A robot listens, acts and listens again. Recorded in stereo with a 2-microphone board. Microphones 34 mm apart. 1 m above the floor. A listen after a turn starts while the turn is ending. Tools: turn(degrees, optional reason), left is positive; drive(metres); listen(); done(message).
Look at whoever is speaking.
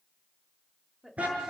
turn(degrees=-30)
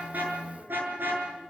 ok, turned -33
listen()
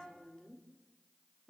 turn(degrees=20, reason="So it is at 20° left.")
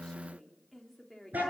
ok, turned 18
done("Facing the woman speaking.")